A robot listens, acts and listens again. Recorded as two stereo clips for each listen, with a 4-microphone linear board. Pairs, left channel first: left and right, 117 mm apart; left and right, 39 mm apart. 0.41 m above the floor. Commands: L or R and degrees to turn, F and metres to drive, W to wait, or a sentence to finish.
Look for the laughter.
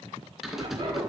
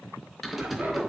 R40
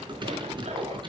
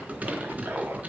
R95
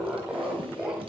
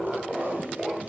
R10
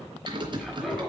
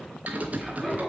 Found it: laughter, straight ahead.